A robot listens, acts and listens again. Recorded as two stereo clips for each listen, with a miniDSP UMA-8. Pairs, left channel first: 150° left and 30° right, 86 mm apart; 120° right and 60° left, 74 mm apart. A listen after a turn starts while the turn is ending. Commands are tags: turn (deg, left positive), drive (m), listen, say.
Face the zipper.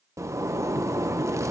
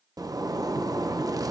<turn deg="25"/>
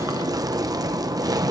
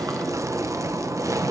<turn deg="15"/>
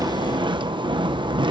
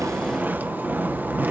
<say>Facing the zipper.</say>